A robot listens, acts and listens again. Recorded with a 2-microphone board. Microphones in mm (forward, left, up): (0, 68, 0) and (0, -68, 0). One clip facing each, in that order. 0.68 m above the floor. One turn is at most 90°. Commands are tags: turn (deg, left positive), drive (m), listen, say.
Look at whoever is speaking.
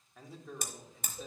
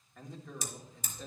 <turn deg="30"/>
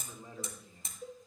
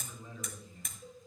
<turn deg="90"/>
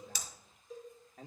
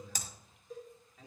<turn deg="65"/>
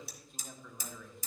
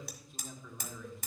<say>Found it: a man speaking, straight ahead.</say>